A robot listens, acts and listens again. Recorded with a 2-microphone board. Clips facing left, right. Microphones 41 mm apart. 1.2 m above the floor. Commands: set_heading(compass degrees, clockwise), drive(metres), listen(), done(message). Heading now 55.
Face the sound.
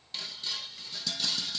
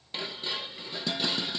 set_heading(85)
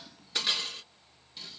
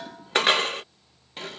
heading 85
set_heading(205)
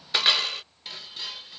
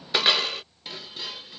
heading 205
done("Facing the dishes clattering.")